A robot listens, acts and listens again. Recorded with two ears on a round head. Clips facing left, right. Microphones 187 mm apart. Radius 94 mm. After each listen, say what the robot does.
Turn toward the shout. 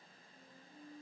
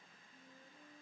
Keep listening.
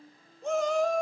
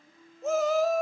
Turn 30° right.
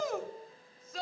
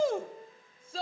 Turn 150° right.
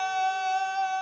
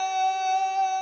Found it: a shout, straight ahead.